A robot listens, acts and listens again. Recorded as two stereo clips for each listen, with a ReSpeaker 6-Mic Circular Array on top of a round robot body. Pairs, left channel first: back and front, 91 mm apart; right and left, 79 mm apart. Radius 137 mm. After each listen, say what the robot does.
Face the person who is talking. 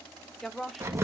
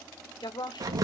Turn 95° right.
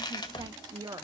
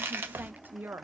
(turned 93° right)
Turn 35° left.
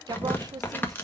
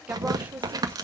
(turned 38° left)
Turn 30° left.
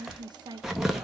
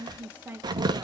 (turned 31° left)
Turn 30° left.
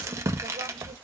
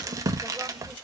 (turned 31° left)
Keep listening.
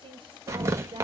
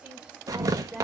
Turn 15° left.
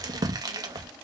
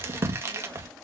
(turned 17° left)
Keep listening.
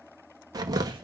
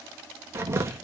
Keep listening.
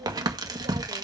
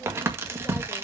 I heard a woman speaking from this way, but can't make it out now.